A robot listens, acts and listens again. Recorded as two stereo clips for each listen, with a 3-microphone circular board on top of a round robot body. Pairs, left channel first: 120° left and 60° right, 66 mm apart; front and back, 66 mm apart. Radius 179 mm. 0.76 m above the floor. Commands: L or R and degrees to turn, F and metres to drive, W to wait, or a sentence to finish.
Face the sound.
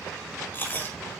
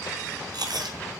L180
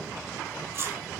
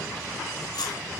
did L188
Found it: chewing, straight ahead, over 4 m away.